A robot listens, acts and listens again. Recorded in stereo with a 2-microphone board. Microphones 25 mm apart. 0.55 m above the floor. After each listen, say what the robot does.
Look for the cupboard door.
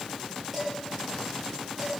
Keep listening.
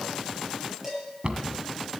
Turn 45° right.
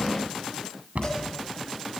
Turn 90° right.
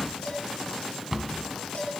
Turn 20° right.
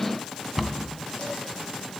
Found it: a cupboard door, straight ahead, 1 to 2 m away.